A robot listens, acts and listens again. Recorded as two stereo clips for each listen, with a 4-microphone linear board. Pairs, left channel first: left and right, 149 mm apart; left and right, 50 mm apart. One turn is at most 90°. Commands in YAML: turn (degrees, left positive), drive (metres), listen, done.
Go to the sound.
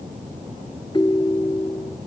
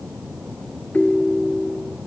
turn: 30
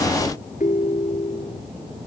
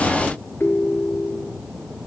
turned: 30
turn: 90
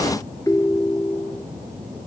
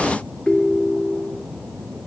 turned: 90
turn: 20
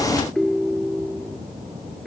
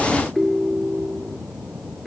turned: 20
drive: 1.0
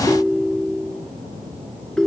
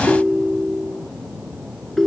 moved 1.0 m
drive: 1.0
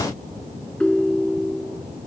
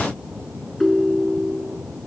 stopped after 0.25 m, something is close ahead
done: "Something is in my way. I am facing the ringtone but have not reached it."